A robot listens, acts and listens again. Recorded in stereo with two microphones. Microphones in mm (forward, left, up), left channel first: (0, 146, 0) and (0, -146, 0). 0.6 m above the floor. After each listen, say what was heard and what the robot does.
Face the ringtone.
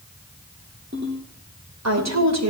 The ringtone: about 35° right or 145° right. Turn 35° right.
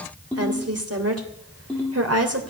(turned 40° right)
Found it: a ringtone, straight ahead, over 4 m away.